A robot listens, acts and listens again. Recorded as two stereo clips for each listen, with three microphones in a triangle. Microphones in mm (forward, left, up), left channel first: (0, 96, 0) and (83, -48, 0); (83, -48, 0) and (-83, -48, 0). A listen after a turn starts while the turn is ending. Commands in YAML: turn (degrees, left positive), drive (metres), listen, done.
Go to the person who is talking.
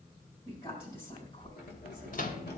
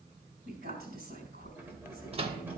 turn: 175
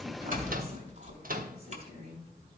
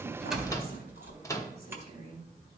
turn: -30
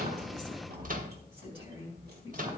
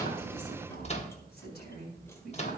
drive: 1.0
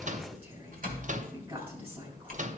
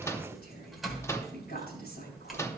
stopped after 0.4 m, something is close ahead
done: "Something is in my way. I am facing the woman speaking but have not reached it."